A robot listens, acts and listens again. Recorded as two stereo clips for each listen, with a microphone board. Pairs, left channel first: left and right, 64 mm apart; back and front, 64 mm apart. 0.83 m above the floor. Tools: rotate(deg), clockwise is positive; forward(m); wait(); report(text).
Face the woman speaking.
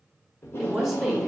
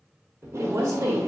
report("Facing the woman speaking, 1 to 2 m away.")